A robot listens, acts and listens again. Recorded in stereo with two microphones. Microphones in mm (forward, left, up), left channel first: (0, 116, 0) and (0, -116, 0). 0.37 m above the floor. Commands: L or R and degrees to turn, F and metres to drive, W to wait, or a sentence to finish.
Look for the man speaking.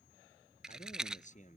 L35
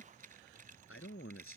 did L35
L115
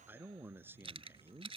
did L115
R10
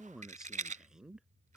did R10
Facing the man speaking.